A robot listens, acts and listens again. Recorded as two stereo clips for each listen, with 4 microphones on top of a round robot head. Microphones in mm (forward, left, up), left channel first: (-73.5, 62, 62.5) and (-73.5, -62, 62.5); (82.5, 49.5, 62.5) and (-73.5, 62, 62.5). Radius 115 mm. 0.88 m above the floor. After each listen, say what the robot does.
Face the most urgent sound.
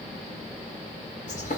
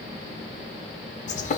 Keep listening.
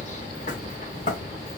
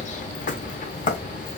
Keep listening.
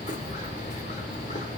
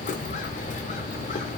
I can't make out anything urgent to turn to.